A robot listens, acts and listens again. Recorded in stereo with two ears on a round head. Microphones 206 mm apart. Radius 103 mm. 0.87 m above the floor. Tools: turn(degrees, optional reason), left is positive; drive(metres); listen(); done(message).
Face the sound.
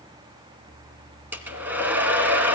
turn(degrees=-30)
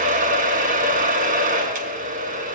turn(degrees=-140, reason="So it is at 140° right.")
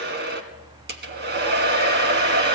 turn(degrees=-50, reason="The hair dryer is now 50° right.")
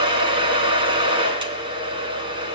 turn(degrees=-25, reason="The hair dryer is now 25° right.")
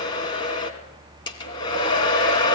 turn(degrees=20, reason="The hair dryer is now 20° left.")
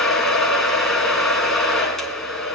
done("Found it: a hair dryer, straight ahead, 2 to 4 m away.")